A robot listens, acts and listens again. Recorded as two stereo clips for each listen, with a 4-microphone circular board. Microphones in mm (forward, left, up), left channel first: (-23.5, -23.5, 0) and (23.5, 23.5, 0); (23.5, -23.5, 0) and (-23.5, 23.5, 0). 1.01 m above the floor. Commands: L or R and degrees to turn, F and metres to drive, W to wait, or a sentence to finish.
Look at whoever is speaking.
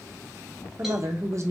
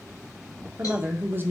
L80
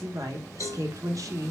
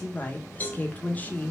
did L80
L15
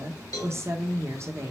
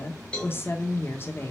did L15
Facing the woman speaking, under 1 m away.